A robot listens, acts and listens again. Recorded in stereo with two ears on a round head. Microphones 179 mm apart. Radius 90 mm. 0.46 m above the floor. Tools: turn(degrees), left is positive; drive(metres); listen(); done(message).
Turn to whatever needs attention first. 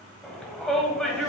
turn(degrees=30)
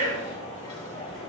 turn(degrees=150)
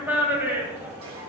turn(degrees=-10)
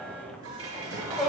done("Facing the shout, 2 to 4 m away.")